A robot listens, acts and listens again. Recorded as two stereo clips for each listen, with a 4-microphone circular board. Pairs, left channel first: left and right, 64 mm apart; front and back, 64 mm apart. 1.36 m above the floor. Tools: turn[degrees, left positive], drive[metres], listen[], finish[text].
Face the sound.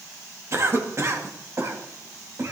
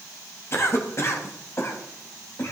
Thought: The cough: 45° right.
Action: turn[-45]
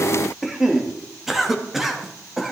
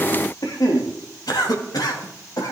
Action: finish[Found it: a cough, straight ahead.]